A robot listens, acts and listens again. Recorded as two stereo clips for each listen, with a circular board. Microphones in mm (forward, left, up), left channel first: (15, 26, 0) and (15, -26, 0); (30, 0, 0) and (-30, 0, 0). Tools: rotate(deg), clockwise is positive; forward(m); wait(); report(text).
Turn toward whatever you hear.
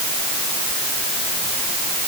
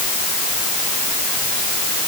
wait()
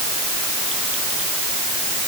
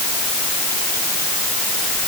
wait()
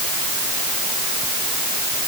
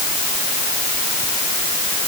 report("I can't make out anything.")